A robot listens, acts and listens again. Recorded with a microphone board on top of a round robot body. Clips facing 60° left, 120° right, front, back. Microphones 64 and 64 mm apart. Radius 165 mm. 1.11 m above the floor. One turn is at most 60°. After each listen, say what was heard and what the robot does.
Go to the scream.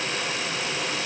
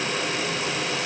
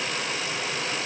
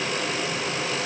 Keep listening.
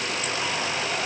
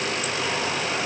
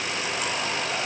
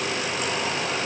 Keep listening.
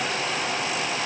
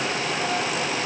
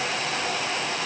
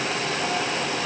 I can't make out a scream.